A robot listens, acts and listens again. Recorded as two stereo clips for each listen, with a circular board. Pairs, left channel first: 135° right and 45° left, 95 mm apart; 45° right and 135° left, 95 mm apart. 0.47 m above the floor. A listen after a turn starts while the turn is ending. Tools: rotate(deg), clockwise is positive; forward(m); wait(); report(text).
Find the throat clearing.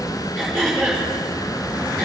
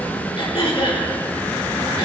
rotate(50)
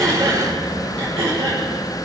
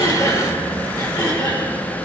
rotate(10)
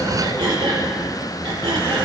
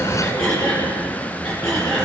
report("Facing the throat clearing, over 4 m away.")